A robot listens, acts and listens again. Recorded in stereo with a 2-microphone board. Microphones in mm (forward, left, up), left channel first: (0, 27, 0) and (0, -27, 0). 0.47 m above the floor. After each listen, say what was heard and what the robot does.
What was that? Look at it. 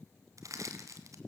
Turn 90° right.
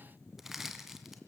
Facing the crushing.